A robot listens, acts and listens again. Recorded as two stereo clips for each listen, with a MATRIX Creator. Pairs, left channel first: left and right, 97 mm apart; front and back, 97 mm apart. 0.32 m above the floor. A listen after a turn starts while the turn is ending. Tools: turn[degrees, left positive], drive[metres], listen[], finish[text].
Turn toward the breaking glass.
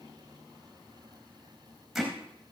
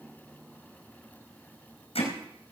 Action: listen[]
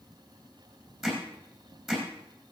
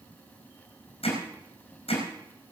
Action: listen[]
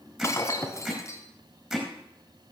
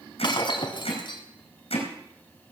Thought: The breaking glass: 30° left.
Action: turn[30]
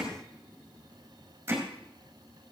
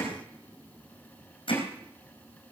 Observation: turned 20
Thought: Nothing new. It was at 10° left.
Action: turn[10]
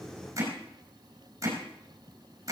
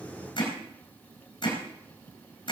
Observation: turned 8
Action: finish[Facing where the breaking glass came from. I can't hear it now.]